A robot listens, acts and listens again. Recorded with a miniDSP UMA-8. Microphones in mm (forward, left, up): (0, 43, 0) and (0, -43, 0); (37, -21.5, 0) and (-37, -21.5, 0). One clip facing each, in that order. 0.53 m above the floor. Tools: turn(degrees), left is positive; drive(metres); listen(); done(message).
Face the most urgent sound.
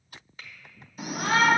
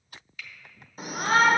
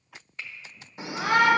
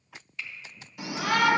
turn(degrees=-55)
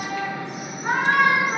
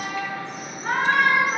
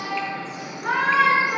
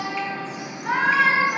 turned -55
turn(degrees=15)
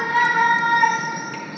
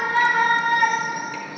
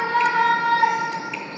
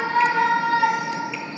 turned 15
done("Found it: a shout, straight ahead, 1 to 2 m away.")